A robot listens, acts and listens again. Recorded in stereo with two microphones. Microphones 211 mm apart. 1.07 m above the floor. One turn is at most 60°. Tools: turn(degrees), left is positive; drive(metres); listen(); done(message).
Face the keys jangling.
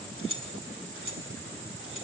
turn(degrees=-60)
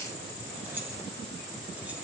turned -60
listen()
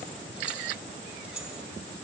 done("Found it: keys jangling, straight ahead.")